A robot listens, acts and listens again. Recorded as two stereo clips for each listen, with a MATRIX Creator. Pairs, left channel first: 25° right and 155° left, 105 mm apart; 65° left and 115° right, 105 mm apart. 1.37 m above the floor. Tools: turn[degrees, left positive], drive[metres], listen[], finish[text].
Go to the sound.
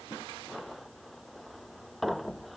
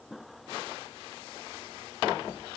Action: listen[]
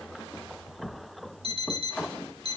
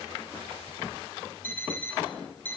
Thought: The alarm clock: 140° left.
Action: turn[140]
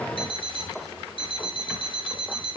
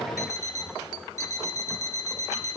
Thought: The alarm clock is now 10° left.
Action: turn[10]
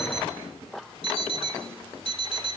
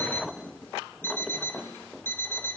Action: drive[1.0]
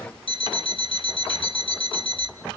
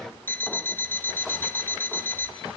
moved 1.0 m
Action: drive[1.0]
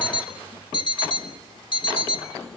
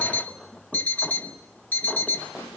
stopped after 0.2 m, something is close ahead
Action: finish[Arrived at the alarm clock, straight ahead.]